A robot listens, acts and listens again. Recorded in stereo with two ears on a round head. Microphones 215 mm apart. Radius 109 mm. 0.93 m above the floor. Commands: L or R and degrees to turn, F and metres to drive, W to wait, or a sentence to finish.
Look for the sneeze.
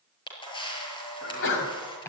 L55
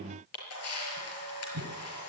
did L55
W
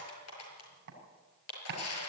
I heard a sneeze, but can't make it out now. It was about straight ahead or 70° left.